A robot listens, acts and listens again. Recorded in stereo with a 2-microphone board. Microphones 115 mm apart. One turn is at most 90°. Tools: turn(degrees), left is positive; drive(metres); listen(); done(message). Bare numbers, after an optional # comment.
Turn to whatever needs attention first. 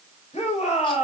# The shout: about 75° left or 105° left.
turn(75)
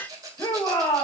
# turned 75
# So it is at 35° left.
turn(35)
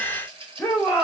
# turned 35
# The shout is now 20° left.
turn(20)
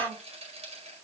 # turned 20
done("Facing the shout, over 4 m away.")